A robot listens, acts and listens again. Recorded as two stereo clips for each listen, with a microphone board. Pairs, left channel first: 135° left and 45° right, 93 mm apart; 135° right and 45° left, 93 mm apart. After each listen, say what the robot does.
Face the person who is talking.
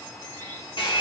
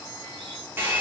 Keep listening.
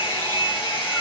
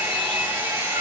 Keep listening.
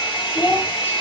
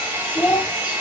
Turn 150° left.
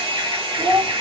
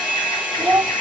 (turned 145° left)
Turn 20° right.
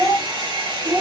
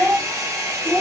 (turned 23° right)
Turn 10° right.
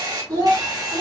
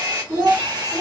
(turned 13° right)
Found it: a child speaking, straight ahead, 2 to 4 m away.